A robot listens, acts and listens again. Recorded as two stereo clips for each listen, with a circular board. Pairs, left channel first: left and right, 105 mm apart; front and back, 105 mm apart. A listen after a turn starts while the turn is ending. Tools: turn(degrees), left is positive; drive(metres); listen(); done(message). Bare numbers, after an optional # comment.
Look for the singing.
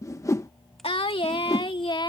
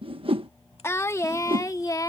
# The singing: 50° left.
turn(50)
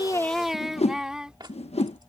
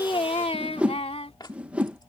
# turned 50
# The singing is now 10° right.
turn(-10)
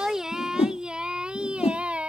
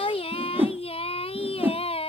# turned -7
# The singing is now 10° right.
turn(-10)
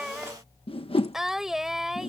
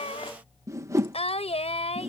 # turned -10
done("Found it: singing, straight ahead.")